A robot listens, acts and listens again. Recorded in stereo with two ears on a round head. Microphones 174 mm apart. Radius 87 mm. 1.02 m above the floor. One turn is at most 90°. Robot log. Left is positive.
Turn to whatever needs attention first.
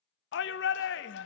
note: The shout: about 60° left or 120° left.
cmd yaw +60
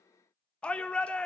end: Facing the shout, under 1 m away.